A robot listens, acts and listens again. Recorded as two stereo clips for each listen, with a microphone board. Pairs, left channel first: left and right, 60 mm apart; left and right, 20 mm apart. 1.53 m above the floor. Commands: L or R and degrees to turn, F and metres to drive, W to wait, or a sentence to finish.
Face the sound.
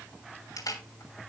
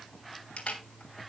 L90
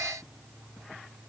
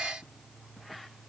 W
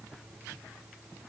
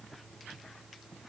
W
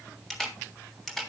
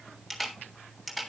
Facing the camera shutter.